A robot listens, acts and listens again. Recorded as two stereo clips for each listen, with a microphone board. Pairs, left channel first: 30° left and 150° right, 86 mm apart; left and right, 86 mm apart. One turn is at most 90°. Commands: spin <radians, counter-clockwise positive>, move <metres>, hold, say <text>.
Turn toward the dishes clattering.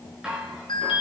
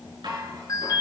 spin -1.22
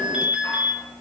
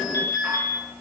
hold
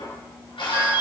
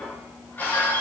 spin 0.44
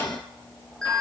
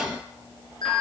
hold
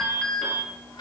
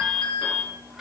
say Facing the dishes clattering, over 4 m away.